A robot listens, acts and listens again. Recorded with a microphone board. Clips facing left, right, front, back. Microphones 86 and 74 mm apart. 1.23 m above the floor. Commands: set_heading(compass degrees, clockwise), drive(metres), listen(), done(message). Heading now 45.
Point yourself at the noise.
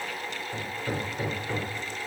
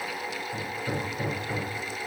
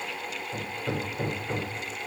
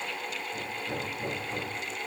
set_heading(20)
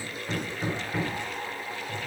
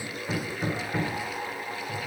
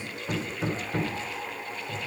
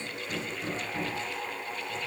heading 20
done("Facing the hammering, 2 to 4 m away.")